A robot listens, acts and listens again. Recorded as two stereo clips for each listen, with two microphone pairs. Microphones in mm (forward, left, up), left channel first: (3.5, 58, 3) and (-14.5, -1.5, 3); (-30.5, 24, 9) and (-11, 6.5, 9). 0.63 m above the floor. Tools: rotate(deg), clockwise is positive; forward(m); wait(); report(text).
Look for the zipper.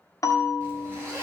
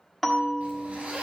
rotate(55)
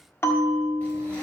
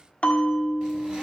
wait()
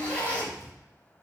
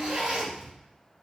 report("Facing the zipper, 2 to 4 m away.")